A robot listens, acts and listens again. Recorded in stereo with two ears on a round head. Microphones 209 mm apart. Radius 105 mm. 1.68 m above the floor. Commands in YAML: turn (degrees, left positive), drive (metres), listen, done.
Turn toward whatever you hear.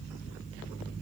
listen: true
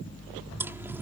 turn: -30
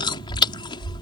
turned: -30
turn: 20
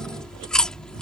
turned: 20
done: "Facing the chewing."